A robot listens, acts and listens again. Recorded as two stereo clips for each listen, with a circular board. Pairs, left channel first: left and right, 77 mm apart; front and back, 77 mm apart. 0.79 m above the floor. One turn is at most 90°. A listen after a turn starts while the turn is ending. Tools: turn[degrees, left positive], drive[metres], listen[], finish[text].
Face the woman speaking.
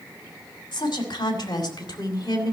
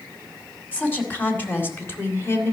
Thought: The woman speaking: 55° left.
Action: turn[55]
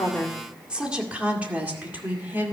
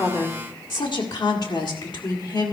Thought: The woman speaking is now 25° right.
Action: turn[-25]
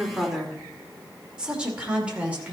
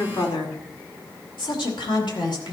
Thought: The woman speaking is now 15° right.
Action: turn[-15]
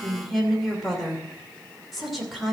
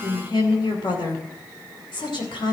Action: finish[Found it: a woman speaking, straight ahead, 2 to 4 m away.]